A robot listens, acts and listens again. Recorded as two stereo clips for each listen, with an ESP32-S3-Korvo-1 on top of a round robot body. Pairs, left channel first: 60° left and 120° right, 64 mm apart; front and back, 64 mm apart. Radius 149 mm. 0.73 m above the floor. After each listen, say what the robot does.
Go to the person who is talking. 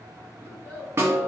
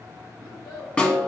Drive 1.0 m forward.
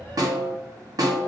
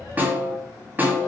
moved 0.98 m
Keep listening.
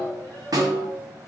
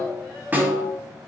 Drive 1.0 m forward.
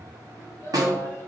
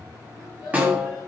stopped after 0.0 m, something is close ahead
Arrived at the child speaking, straight ahead.